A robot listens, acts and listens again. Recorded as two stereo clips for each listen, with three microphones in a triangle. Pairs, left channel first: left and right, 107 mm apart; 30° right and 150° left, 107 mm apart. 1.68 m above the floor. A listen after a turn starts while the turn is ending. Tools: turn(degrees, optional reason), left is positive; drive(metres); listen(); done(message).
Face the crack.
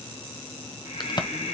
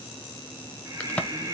turn(degrees=45, reason="The crack: 45° left.")
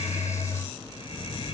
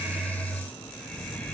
done("I heard a crack from this way, but can't make it out now.")